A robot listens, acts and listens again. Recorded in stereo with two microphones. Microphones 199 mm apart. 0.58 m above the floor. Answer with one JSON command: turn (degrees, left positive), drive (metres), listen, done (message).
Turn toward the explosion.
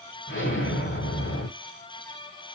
{"turn": 60}
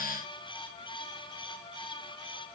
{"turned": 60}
{"listen": true}
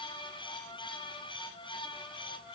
{"done": "I heard an explosion, but can't make it out now. It was about straight ahead or 60° left."}